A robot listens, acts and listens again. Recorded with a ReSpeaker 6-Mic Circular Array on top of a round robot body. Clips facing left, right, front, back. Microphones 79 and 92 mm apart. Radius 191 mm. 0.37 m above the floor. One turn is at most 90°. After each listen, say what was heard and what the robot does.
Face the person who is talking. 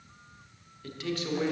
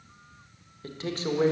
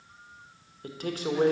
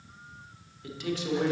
The man speaking: 35° right. Turn 35° right.
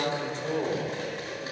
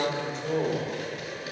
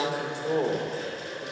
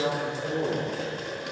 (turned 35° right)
Found it: a man speaking, straight ahead, 1 to 2 m away.